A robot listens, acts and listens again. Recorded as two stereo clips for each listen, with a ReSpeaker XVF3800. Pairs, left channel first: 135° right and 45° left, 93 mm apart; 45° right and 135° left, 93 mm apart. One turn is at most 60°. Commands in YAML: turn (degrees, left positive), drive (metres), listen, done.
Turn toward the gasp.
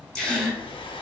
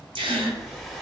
turn: 60
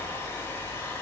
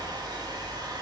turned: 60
turn: 60
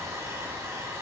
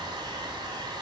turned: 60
turn: 25
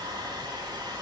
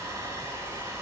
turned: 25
done: "I heard a gasp from this way, but can't make it out now."